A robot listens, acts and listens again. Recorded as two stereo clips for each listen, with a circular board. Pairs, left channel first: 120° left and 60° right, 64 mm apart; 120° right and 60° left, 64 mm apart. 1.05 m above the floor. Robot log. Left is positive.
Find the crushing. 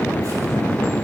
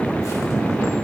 cmd idle
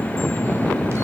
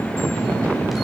cmd idle
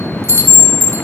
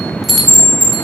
end: I can't make out crushing, only a chime.